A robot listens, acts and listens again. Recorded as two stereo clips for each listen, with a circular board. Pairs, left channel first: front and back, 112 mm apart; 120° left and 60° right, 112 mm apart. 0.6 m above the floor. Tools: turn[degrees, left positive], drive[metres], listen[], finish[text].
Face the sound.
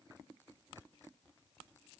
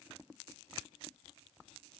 Action: listen[]
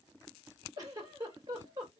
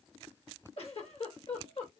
Thought: The giggle: 130° left.
Action: turn[130]
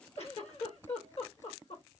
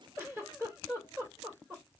Action: finish[Facing the giggle, 2 to 4 m away.]